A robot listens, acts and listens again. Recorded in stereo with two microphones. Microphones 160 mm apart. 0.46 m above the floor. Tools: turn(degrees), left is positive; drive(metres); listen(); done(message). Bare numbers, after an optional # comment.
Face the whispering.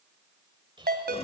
# The whispering: about 30° right or 150° right.
turn(-30)
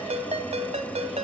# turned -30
listen()
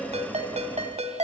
listen()
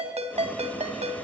done("I heard whispering, but can't make it out now. It was about straight ahead or 120° right.")